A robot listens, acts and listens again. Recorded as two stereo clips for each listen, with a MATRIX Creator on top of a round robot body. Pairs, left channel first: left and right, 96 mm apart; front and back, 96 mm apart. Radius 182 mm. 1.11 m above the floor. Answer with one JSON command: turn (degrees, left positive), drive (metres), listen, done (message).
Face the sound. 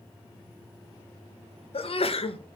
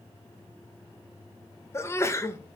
{"turn": 65}
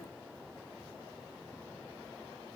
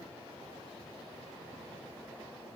{"done": "Facing where the sneeze came from. I can't hear it now."}